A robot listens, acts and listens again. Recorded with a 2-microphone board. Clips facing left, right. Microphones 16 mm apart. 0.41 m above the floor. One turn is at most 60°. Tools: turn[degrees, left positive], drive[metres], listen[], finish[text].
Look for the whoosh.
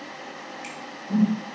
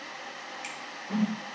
Action: turn[-60]
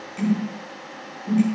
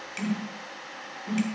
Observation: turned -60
Thought: So it is at 30° right.
Action: turn[-30]
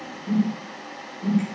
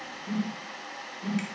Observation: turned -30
Thought: The whoosh is now 10° right.
Action: turn[-10]
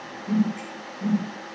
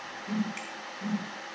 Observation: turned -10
Action: finish[Found it: a whoosh, straight ahead, under 1 m away.]